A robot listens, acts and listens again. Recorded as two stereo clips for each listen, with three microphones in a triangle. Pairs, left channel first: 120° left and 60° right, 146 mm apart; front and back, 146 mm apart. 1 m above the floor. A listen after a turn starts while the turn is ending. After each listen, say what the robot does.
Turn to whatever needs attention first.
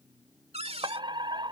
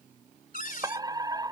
Turn 120° right.
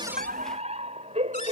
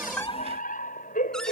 Turn 20° right.
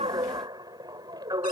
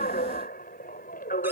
Found it: a fire alarm, straight ahead.